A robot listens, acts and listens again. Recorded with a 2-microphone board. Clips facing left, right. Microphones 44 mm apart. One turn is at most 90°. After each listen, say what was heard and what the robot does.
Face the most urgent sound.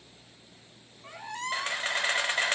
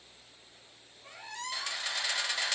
Keep listening.
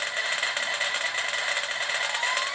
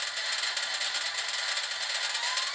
Keep listening.
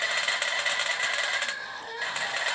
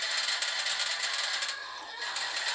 The crying: about 65° left or 115° left. Turn 65° left.
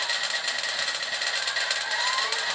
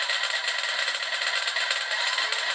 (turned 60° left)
Keep listening.
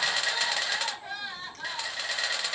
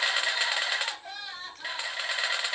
So it is at 20° left. Turn 20° left.
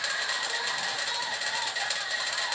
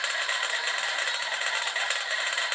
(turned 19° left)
Keep listening.
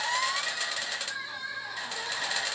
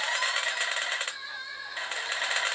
Found it: crying, straight ahead, 2 to 4 m away.